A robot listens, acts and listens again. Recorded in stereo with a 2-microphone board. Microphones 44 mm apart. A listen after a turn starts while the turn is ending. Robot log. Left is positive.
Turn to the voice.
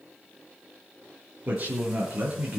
note: The man speaking: about 40° right or 140° right.
cmd yaw -40
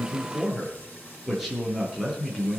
end: Found it: a man speaking, straight ahead.